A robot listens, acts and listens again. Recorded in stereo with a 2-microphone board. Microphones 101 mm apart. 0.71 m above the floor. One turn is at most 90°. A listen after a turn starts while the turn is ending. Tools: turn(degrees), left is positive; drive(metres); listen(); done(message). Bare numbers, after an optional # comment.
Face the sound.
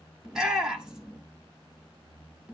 turn(-30)
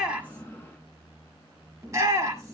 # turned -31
# So it is at 145° right.
turn(-90)
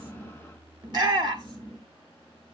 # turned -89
# The shout is now 55° right.
turn(-55)
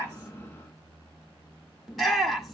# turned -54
done("Facing the shout.")